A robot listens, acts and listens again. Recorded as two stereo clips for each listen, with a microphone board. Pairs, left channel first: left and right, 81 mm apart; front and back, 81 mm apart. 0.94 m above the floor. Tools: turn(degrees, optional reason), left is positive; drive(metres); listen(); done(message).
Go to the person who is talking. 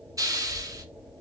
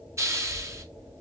turn(degrees=160, reason="The child speaking: 160° left.")
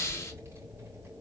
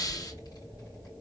turn(degrees=-30, reason="The child speaking is now 30° right.")
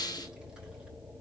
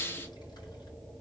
turn(degrees=-10, reason="The child speaking is now 10° right.")
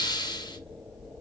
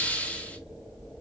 drive(metres=1.0)
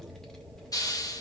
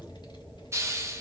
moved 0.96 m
drive(metres=1.0)
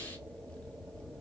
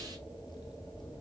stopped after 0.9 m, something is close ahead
turn(degrees=15, reason="The child speaking is now 15° left.")
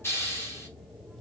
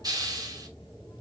listen()
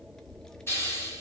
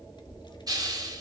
turn(degrees=10, reason="The child speaking is now 10° left.")
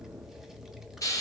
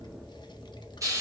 done("Arrived at the child speaking, straight ahead.")